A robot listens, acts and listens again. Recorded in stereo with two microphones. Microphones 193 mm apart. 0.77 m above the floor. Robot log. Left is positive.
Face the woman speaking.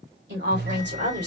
note: The woman speaking: about 60° right or 120° right.
cmd yaw -60
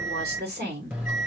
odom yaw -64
note: So it is at 60° right.
cmd yaw -60
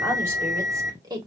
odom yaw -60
note: The woman speaking is now 20° right.
cmd yaw -20
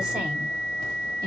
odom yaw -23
cmd idle
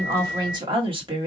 note: The woman speaking is now 25° right.
cmd yaw -25
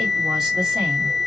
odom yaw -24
cmd idle
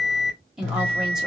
end: Facing the woman speaking, 1 to 2 m away.